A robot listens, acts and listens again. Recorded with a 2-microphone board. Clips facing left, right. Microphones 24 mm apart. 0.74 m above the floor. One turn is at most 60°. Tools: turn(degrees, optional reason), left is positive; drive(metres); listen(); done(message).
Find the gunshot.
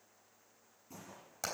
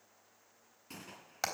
turn(degrees=-60, reason="The gunshot: about 70° right or 110° right.")
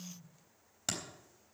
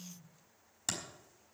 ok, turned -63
listen()
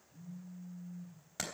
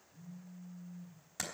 done("I heard a gunshot, but can't make it out now. It was about 5° right or 50° right.")